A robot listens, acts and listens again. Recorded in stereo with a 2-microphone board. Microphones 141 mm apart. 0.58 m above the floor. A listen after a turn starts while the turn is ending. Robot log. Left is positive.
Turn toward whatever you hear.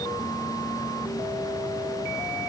cmd idle
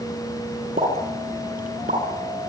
cmd yaw -90
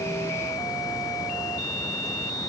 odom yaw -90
end: Facing where the pop came from. I can't hear it now.